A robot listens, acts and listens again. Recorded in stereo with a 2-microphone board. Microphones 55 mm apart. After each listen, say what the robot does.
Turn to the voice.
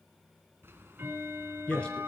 Turn 20° left.
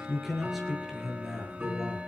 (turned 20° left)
Found it: a man speaking, straight ahead.